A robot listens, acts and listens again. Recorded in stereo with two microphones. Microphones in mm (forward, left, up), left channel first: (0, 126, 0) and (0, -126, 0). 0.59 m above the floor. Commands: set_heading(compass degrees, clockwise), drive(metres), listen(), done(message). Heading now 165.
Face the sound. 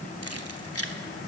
set_heading(100)
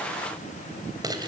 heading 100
set_heading(115)
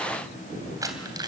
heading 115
set_heading(130)
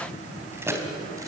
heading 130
set_heading(140)
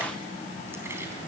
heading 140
listen()
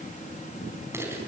set_heading(150)
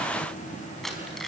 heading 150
done("Found it: keys jangling, straight ahead, over 4 m away.")